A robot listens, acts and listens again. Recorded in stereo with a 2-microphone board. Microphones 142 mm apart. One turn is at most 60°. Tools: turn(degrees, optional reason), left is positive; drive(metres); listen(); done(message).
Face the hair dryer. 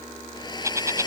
turn(degrees=30, reason="The hair dryer: about 30° left or 150° left.")
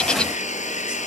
turn(degrees=60, reason="So it is at 120° left.")
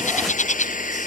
turn(degrees=60, reason="The hair dryer is now 70° left.")
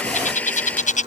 turn(degrees=10, reason="The hair dryer is now 10° left.")
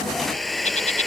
done("Found it: a hair dryer, straight ahead.")